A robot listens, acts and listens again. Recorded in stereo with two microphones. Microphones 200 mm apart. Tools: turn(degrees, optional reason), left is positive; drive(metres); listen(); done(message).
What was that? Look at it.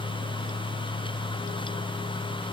listen()
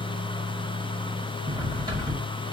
turn(degrees=-20, reason="The cutlery clinking: about 20° right or 160° right.")
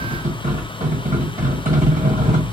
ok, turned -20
turn(degrees=-130, reason="So it is at 130° right.")
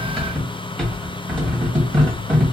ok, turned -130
done("Facing the cutlery clinking, 1 to 2 m away.")